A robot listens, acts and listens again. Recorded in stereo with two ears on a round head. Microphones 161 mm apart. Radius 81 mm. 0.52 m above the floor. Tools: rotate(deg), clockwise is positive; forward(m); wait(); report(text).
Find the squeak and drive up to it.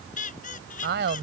rotate(-50)
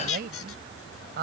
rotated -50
rotate(-85)
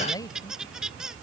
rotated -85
forward(1.0)
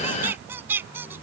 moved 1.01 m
rotate(10)
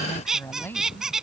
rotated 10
forward(1.0)
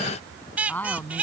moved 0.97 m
rotate(10)
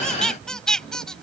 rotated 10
forward(1.0)
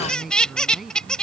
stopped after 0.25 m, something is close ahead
report("Arrived at the squeak, straight ahead.")